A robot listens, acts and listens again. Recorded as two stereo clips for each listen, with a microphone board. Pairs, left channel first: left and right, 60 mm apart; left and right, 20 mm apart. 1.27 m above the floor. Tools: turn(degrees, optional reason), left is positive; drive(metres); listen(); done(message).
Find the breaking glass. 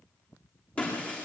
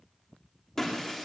turn(degrees=25, reason="The breaking glass: about 25° left or 155° left.")
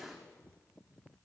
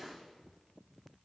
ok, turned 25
listen()
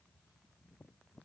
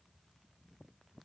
done("I heard breaking glass, but can't make it out now. It was about straight ahead or 130° left.")